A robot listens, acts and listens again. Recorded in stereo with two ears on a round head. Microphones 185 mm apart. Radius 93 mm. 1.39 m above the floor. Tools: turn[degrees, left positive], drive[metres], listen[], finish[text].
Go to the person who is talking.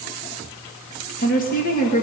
Thought: The woman speaking: about 40° left or 140° left.
Action: turn[40]
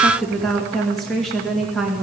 Action: drive[1.0]
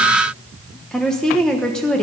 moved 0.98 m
Action: drive[1.0]
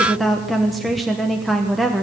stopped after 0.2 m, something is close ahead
Action: finish[Arrived at the woman speaking, straight ahead.]